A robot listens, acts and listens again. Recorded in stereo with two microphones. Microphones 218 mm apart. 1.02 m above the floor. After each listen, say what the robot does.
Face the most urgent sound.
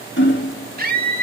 Turn 45° right.
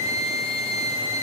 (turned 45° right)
Turn 90° right.
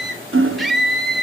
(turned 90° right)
Facing the scream, 2 to 4 m away.